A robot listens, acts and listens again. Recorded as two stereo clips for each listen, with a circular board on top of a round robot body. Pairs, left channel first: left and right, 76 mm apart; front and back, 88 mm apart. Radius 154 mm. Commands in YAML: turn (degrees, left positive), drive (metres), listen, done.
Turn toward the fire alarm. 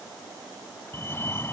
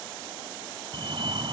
turn: 150
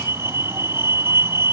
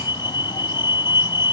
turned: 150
turn: -35
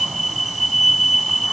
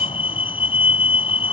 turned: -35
done: "Facing the fire alarm."